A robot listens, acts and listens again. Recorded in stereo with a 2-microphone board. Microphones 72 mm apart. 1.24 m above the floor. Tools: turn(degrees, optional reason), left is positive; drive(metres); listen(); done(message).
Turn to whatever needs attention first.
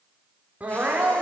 turn(degrees=-20, reason="The crying: about 20° right or 160° right.")
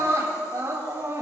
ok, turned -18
turn(degrees=-145, reason="So it is at 145° right.")
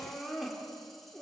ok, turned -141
done("Facing the crying, over 4 m away.")